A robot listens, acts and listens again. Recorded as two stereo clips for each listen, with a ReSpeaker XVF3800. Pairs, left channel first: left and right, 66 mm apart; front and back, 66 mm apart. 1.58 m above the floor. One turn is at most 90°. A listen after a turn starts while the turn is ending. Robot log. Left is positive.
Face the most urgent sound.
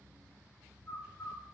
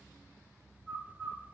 cmd idle
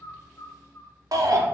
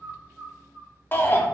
note: The shout: 60° right.
cmd yaw -60
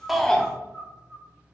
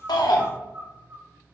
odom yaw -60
cmd idle
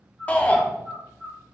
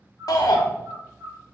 note: The shout is now 20° left.
cmd yaw +20
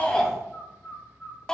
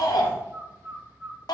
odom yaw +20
note: The shout is now 10° left.
cmd yaw +10
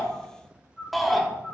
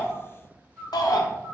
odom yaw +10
end: Found it: a shout, straight ahead, under 1 m away.